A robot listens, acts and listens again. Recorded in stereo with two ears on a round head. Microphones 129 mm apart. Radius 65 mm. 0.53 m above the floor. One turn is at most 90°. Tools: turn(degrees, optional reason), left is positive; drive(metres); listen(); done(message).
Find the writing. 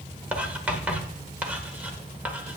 turn(degrees=-30)
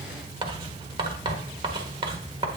turn(degrees=-90, reason="So it is at 135° right.")
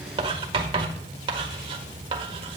turn(degrees=-40, reason="The writing is now 40° right.")
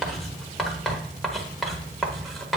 done("Found it: writing, straight ahead, 1 to 2 m away.")